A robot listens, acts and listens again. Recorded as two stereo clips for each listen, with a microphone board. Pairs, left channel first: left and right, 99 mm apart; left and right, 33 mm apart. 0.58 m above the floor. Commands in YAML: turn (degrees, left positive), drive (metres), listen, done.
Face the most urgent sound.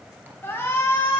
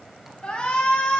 turn: 25
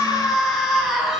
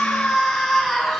done: "Facing the shout, over 4 m away."